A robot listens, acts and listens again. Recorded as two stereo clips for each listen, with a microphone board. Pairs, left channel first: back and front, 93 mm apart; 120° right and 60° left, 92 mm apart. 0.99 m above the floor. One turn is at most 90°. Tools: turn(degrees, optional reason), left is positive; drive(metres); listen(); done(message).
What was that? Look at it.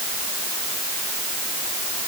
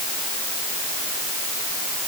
listen()
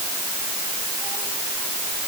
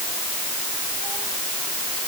listen()
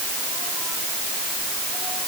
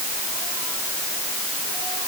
done("I can't make out anything.")